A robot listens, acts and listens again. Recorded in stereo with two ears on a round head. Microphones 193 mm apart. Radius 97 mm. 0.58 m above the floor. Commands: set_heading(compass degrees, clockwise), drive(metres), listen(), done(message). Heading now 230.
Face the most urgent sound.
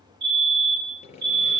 set_heading(285)
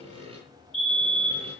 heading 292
done("Found it: a fire alarm, straight ahead, 2 to 4 m away.")